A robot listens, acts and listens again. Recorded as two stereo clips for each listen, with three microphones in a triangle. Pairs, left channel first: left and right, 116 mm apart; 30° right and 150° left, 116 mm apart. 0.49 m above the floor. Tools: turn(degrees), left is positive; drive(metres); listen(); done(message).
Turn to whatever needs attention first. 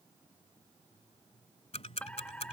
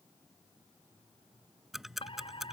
turn(degrees=10)
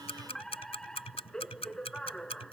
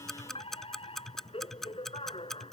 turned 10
done("Facing the fire alarm.")